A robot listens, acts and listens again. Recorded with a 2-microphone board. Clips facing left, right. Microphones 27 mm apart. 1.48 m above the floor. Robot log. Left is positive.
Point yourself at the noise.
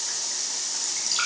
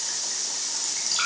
cmd yaw +30
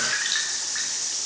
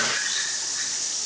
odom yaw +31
note: So it is at 145° left.
cmd yaw +145
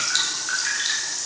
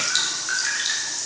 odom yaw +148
end: Facing the dripping.